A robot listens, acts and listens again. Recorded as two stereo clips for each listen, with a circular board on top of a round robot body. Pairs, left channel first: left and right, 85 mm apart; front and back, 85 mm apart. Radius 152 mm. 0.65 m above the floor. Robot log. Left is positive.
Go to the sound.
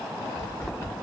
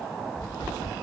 note: The tapping: 20° left.
cmd yaw +20
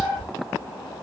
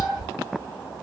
cmd fwd 1.0
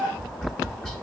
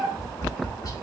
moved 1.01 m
note: The tapping is now 15° left.
cmd yaw +15
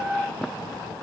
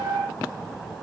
cmd idle
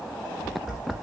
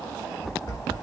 cmd fwd 1.0
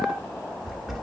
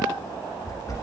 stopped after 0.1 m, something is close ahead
end: I am next to the tapping.